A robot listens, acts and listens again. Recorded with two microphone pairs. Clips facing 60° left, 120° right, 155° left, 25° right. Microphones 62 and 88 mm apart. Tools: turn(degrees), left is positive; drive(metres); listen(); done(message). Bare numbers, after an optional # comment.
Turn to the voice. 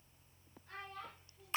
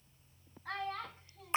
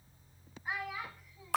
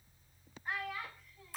# The child speaking: 125° right.
turn(-125)
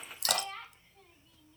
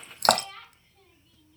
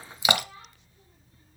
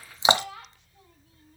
# The child speaking is now 20° right.
turn(-20)
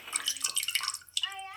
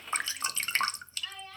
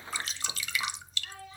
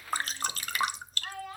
done("Facing the child speaking.")